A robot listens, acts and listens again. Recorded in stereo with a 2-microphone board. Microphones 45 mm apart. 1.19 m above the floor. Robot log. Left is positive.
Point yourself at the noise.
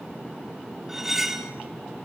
cmd yaw -30
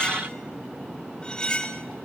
note: So it is at 20° left.
cmd yaw +20
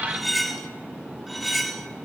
end: Facing the cutlery clinking, 1 to 2 m away.